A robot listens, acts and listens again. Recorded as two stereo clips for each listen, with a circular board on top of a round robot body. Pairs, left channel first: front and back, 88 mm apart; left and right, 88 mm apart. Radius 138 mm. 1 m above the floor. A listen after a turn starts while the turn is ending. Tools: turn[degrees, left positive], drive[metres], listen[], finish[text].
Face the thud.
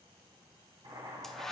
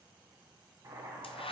Action: listen[]
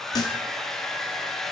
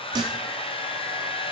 Thought: The thud: 50° right.
Action: turn[-50]
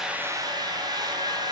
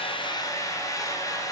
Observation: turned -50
Action: finish[Facing where the thud came from. I can't hear it now.]